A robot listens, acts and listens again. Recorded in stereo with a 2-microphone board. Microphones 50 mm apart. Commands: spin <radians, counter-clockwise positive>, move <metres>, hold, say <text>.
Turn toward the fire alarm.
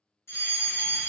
spin 1.05
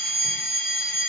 spin 0.79
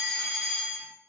say Facing the fire alarm, 1 to 2 m away.